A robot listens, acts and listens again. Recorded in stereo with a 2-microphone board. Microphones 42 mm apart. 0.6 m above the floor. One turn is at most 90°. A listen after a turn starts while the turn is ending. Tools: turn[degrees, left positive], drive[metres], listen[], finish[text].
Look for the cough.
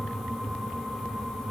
Action: listen[]
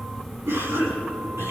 Action: turn[-90]
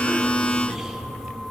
Action: listen[]
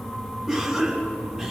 Thought: The cough is now 15° right.
Action: turn[-15]
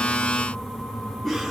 Action: finish[Found it: a cough, straight ahead, over 4 m away.]